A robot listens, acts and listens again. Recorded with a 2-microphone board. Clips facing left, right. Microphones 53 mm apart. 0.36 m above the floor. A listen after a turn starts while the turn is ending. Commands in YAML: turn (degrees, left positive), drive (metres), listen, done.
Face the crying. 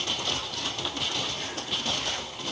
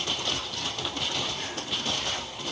listen: true
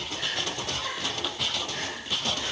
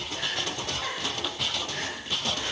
turn: -40
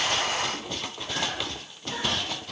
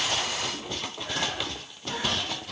listen: true
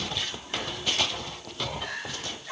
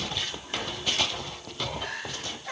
turn: -90
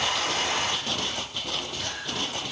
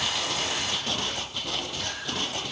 listen: true
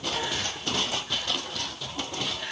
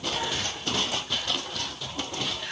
turn: 20
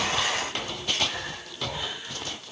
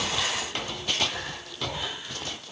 done: "Facing the crying."